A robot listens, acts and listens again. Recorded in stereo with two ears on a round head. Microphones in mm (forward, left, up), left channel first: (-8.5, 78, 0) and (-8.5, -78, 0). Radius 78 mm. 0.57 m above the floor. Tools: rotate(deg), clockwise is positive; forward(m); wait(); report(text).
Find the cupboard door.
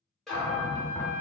rotate(-30)
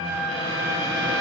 wait()
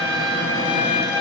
wait()
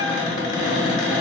rotate(-150)
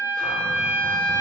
wait()
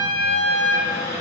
rotate(15)
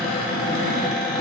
report("Facing the cupboard door, under 1 m away.")